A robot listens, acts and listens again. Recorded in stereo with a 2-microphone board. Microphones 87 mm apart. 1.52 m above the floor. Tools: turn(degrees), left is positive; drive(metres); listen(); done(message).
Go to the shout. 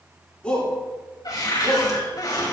turn(degrees=30)
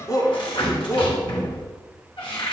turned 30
turn(degrees=140)
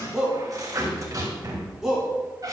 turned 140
drive(metres=1.0)
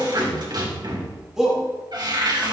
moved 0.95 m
drive(metres=1.0)
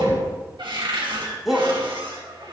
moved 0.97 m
drive(metres=1.0)
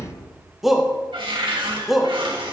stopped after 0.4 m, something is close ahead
done("Arrived at the shout, straight ahead.")